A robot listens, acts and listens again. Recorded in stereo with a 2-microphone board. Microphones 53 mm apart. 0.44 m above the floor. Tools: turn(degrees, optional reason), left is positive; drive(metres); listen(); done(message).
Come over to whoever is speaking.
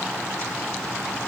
listen()
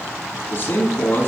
turn(degrees=40, reason="The man speaking: about 40° left or 140° left.")
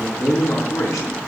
turn(degrees=100, reason="So it is at 100° left.")
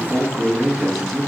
drive(metres=1.0)
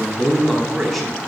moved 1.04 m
drive(metres=1.0)
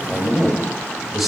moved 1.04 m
drive(metres=1.0)
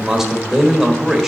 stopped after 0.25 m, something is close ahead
turn(degrees=-10, reason="The man speaking is now 10° right.")
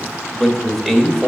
done("Arrived at the man speaking, straight ahead.")